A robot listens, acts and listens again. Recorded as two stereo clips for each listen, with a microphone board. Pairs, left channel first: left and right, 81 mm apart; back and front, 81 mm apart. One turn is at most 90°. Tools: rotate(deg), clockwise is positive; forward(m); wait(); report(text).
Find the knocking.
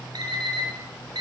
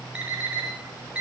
wait()
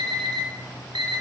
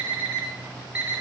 wait()
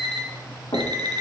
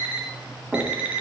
rotate(-90)
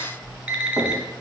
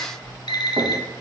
wait()
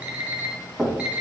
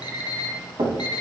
report("Found it: knocking, straight ahead.")